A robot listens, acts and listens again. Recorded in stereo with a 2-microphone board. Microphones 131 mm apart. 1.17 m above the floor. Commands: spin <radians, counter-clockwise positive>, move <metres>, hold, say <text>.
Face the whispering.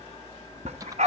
hold
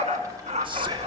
spin -0.70
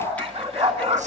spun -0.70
hold
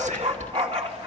spin -1.75
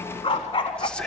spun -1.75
spin 0.17
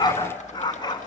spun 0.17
hold
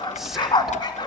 say Found it: whispering, straight ahead.